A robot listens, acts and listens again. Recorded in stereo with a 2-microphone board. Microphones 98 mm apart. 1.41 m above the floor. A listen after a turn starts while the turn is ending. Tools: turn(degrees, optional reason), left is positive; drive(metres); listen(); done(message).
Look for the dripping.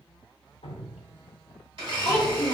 turn(degrees=90)
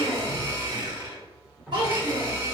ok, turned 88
turn(degrees=-10, reason="So it is at 10° right.")
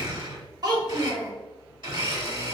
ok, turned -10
listen()
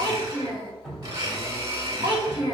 done("Found it: dripping, straight ahead.")